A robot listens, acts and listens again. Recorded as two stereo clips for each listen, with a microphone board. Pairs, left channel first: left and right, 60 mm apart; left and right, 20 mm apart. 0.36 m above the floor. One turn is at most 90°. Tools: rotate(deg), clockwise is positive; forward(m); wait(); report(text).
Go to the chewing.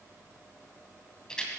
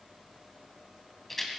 wait()
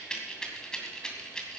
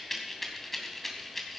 wait()
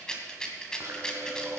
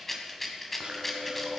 rotate(60)
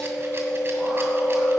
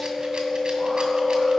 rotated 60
rotate(15)
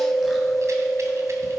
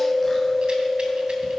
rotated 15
forward(1.0)
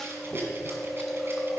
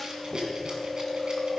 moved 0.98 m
forward(1.0)
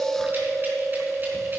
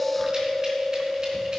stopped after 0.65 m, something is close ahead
report("I am next to the chewing.")